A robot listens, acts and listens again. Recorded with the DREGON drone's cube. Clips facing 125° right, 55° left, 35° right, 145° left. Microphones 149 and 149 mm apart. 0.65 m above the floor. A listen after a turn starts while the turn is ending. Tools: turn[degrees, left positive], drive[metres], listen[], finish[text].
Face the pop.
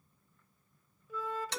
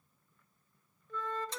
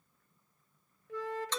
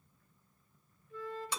Action: listen[]
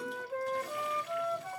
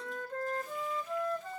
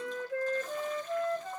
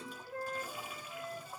Action: listen[]
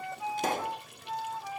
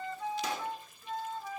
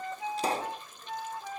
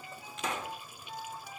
Thought: The pop: 90° right.
Action: turn[-90]
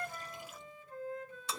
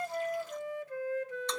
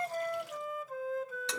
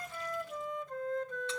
Action: finish[Facing where the pop came from. I can't hear it now.]